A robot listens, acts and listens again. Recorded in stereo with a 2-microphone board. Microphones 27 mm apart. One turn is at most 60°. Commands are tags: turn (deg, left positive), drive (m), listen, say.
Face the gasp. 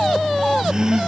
<turn deg="-25"/>
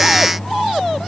<listen/>
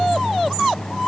<say>I heard a gasp, but can't make it out now. It was about straight ahead or 130° right.</say>